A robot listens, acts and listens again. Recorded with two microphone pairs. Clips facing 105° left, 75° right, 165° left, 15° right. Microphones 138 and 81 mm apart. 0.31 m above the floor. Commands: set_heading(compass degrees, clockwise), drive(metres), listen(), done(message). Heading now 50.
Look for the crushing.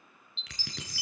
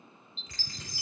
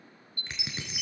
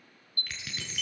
set_heading(310)
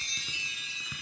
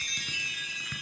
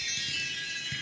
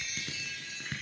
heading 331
set_heading(306)
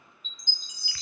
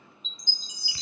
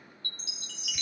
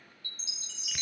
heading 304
listen()
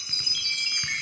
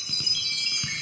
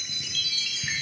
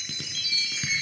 listen()
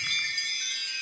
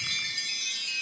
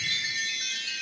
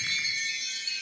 done("I heard crushing from this way, but can't make it out now.")